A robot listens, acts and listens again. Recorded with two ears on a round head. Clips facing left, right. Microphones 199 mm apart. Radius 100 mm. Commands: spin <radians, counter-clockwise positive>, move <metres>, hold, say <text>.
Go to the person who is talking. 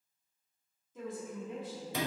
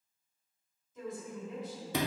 spin 0.79
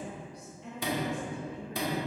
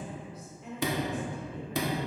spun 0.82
move 1.0
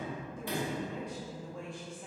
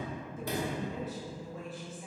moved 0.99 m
move 1.0
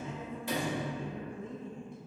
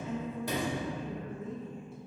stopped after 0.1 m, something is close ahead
say I am next to the woman speaking.